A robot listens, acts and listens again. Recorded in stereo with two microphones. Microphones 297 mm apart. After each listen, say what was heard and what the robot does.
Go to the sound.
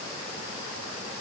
Keep listening.
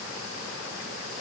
Keep listening.
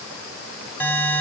Turn 30° left.
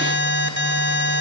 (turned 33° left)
So it is at 140° left. Turn 140° left.
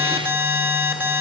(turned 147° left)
Drive 1.0 m forward.
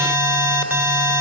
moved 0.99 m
Drive 1.0 m forward.
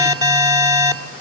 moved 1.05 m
The alarm is now 15° right. Turn 15° right.
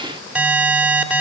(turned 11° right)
Drive 1.0 m forward.
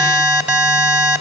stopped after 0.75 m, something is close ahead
Arrived at the alarm, straight ahead.